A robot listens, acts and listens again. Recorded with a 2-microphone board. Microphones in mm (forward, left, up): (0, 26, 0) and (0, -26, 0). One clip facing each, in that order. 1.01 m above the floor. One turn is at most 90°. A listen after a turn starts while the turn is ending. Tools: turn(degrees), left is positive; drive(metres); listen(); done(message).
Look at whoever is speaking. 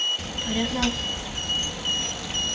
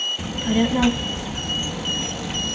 turn(degrees=-15)
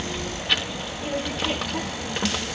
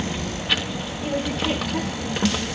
done("Found it: a child speaking, straight ahead.")